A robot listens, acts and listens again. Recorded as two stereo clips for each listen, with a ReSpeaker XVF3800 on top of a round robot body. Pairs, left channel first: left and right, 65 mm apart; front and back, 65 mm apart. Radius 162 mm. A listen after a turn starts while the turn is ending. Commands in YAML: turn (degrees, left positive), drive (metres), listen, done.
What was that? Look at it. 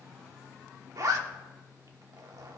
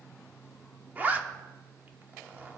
turn: -115
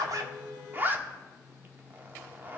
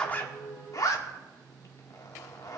turn: -30
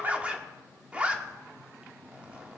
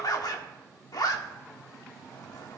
turn: -20
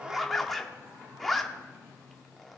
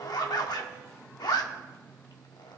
done: "Found it: a zipper, straight ahead."